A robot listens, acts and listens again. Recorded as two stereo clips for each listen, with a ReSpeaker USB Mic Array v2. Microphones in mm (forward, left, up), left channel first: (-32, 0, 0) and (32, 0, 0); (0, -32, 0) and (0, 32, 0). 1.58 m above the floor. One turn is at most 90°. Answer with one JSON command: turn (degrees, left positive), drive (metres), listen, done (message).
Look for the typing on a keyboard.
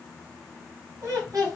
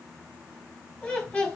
{"listen": true}
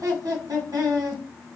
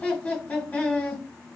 {"listen": true}
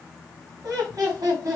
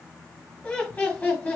{"done": "I can't make out typing on a keyboard to turn to."}